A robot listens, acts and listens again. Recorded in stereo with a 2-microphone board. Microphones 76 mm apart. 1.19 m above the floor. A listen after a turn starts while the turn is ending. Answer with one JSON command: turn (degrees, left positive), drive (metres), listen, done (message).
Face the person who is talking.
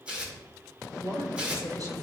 {"turn": -50}
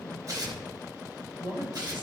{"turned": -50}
{"turn": -80}
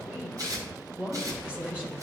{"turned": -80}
{"turn": -15}
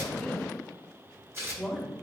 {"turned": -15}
{"done": "Found it: a woman speaking, straight ahead."}